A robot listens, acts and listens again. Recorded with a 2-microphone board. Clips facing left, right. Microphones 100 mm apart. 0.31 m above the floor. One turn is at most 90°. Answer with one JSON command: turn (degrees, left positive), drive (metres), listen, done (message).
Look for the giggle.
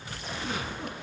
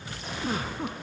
{"turn": -40}
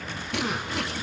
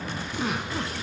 {"done": "Found it: a giggle, straight ahead, 1 to 2 m away."}